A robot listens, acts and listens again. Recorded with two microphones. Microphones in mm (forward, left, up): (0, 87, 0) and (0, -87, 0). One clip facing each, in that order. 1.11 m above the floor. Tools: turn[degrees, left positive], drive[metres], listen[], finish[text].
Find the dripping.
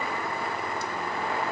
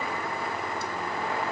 Action: listen[]
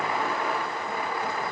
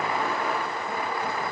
Action: listen[]
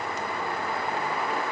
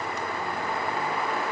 Action: finish[I can't make out dripping.]